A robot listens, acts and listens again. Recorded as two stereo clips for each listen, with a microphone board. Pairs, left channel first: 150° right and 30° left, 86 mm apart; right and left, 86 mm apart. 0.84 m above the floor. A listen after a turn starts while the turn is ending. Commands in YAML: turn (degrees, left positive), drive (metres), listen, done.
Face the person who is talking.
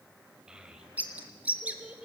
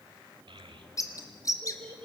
turn: 110
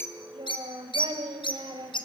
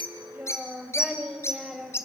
done: "Found it: a child speaking, straight ahead."